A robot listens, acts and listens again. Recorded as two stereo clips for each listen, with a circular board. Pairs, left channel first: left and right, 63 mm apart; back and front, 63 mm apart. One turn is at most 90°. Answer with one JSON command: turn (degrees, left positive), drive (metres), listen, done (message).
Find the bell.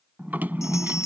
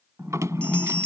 {"turn": 90}
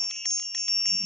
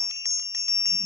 {"turn": 10}
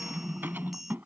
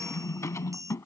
{"done": "Found it: a bell, straight ahead."}